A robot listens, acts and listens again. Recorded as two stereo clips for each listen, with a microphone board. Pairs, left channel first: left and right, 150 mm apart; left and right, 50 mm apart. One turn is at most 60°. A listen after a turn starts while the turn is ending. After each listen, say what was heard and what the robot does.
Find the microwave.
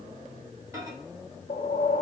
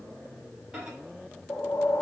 The microwave: about 20° right or 160° right. Turn 20° right.
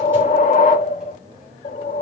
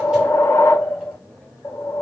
Keep listening.
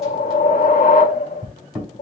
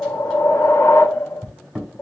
Found it: a microwave, straight ahead, over 4 m away.